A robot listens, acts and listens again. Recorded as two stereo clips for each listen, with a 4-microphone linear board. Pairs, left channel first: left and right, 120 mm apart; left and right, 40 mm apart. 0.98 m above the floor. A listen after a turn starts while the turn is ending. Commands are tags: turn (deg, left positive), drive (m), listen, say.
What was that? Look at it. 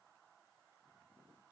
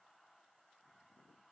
<listen/>
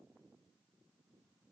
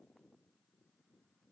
<listen/>
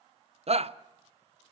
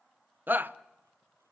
<turn deg="-65"/>
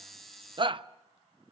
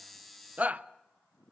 <turn deg="-50"/>
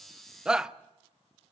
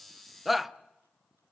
<say>Found it: a shout, straight ahead, under 1 m away.</say>